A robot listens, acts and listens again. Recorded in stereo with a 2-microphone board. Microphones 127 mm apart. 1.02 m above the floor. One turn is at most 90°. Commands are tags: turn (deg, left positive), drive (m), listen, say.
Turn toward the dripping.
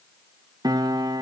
<listen/>
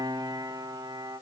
<listen/>
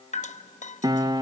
<turn deg="70"/>
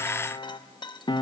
<listen/>
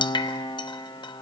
<turn deg="35"/>
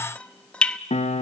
<turn deg="10"/>
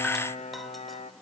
<listen/>
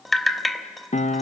<say>Found it: dripping, straight ahead.</say>